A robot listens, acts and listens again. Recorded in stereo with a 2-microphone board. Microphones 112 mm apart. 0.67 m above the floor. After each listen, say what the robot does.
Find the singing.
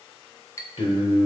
Turn 60° left.
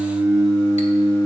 Turn 15° left.
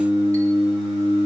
Found it: singing, straight ahead.